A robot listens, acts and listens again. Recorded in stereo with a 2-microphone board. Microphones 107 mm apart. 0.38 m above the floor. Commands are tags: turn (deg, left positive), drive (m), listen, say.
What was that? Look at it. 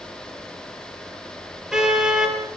<turn deg="-30"/>
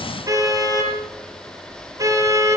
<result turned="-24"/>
<turn deg="-150"/>
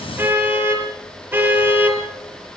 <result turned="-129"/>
<turn deg="-20"/>
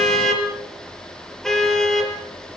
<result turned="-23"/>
<say>Facing the car horn, over 4 m away.</say>